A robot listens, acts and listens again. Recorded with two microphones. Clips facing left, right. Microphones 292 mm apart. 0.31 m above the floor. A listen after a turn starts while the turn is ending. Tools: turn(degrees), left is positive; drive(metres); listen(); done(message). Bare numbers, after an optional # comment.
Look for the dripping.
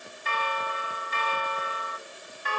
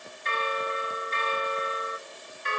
listen()
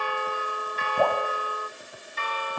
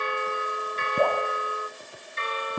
# The dripping: about 40° right or 140° right.
turn(-40)
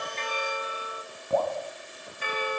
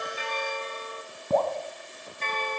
# So it is at 95° right.
turn(-95)
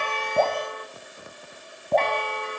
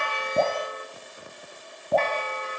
done("Facing the dripping.")